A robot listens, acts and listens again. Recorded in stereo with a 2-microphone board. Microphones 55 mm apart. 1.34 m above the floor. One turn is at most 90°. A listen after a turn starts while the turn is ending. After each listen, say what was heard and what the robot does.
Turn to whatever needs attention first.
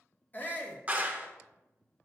The shout: about 30° left or 150° left. Turn 30° left.
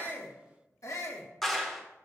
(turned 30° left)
So it is at 115° left. Turn 90° left.
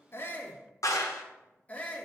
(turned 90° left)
The shout is now 30° left. Turn 30° left.
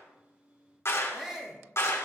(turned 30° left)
The shout is now 10° right. Turn 10° right.
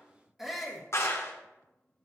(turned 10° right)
Found it: a shout, straight ahead.